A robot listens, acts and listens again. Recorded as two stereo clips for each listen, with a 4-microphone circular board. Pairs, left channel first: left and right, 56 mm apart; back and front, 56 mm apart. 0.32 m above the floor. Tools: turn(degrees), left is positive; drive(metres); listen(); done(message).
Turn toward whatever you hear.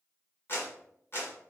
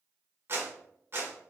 turn(degrees=50)
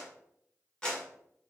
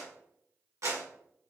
turn(degrees=20)
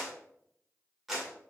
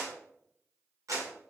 done("Found it: a clap, straight ahead.")